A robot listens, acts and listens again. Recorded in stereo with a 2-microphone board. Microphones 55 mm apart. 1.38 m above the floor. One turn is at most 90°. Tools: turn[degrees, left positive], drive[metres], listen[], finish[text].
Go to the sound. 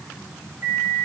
Thought: The microwave: about 40° right or 140° right.
Action: turn[-40]
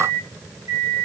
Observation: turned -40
Thought: So it is at 100° right.
Action: turn[-90]
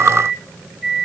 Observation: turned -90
Thought: The microwave is now 10° right.
Action: turn[-10]
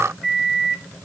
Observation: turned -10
Action: drive[1.0]
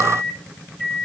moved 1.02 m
Action: drive[1.0]
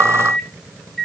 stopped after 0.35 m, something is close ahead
Action: finish[Blocked. The microwave is further on, straight ahead.]